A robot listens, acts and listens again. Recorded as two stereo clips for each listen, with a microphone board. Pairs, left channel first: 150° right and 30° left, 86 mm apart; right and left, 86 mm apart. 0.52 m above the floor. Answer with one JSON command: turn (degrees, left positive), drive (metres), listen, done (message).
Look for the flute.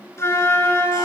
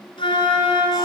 {"turn": -95}
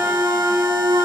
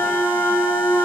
{"turn": -30}
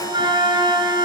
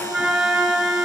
{"done": "Found it: a flute, straight ahead."}